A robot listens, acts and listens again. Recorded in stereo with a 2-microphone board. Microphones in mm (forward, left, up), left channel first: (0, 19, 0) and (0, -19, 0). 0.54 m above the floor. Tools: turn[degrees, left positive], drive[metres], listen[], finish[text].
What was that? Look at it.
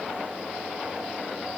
Action: listen[]
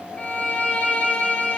Thought: The violin: about 30° left or 150° left.
Action: turn[30]
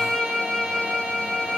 Action: finish[Facing the violin, 1 to 2 m away.]